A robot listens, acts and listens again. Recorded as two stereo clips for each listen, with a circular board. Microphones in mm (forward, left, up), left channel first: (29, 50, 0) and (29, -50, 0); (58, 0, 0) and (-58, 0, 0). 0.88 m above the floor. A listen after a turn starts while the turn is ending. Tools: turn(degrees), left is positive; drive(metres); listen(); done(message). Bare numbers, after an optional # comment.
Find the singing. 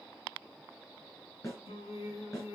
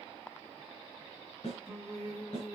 # The singing: 70° left.
turn(70)
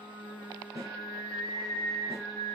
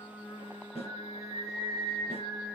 done("Facing the singing, 2 to 4 m away.")